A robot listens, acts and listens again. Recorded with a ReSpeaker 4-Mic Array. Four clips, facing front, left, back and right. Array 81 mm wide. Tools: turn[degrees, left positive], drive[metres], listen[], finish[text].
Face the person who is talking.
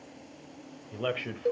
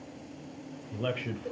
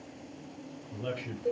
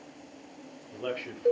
Action: finish[Found it: a man speaking, straight ahead.]